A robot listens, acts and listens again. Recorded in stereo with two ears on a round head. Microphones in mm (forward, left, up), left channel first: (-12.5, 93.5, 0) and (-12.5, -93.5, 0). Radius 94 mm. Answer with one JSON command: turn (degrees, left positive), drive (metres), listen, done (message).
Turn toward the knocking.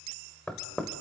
{"turn": 30}
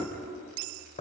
{"turn": 145}
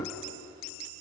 {"turn": 20}
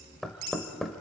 {"done": "Facing the knocking, 1 to 2 m away."}